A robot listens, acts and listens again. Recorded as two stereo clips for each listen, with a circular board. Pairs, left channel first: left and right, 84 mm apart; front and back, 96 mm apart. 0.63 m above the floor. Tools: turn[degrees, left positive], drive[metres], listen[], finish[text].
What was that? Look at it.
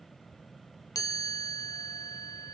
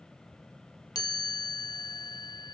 Thought: The chime: 45° left.
Action: turn[45]
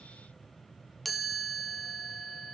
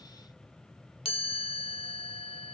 Action: finish[Found it: a chime, straight ahead, under 1 m away.]